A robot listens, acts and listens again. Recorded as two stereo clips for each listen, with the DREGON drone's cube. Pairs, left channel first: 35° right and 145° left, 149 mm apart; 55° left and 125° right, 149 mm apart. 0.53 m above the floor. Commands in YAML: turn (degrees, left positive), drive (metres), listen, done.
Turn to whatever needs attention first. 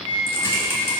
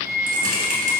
listen: true
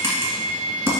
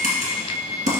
listen: true
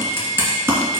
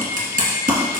done: "I can't make out anything urgent, only typing on a keyboard and a flute."